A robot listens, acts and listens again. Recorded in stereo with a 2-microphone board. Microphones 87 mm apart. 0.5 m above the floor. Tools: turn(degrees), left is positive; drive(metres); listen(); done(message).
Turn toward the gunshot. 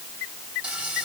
listen()
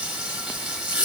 listen()
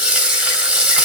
done("I can't make out a gunshot to turn to.")